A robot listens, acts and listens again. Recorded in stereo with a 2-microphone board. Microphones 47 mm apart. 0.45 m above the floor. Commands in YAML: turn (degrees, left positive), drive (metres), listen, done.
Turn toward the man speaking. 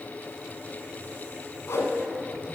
listen: true
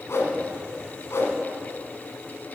listen: true
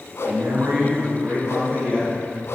turn: -50
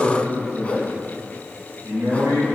turn: -70
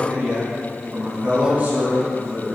turn: -30
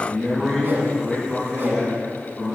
done: "Found it: a man speaking, straight ahead, over 4 m away."